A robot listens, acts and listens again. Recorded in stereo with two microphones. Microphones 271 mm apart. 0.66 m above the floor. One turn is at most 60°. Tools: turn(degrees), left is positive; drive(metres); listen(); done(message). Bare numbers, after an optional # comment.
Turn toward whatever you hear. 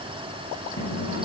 # The microwave: about 75° left or 105° left.
turn(60)
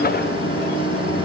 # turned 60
# So it is at 45° left.
turn(45)
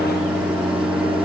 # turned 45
done("Facing the microwave.")